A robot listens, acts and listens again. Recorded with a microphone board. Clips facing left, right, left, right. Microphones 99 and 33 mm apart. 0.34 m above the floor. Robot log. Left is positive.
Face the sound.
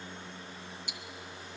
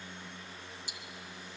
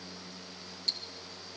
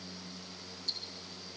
note: The ticking: about 60° left or 120° left.
cmd yaw +60
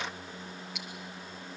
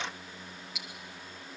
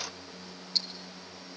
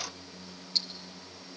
end: Facing the ticking, 1 to 2 m away.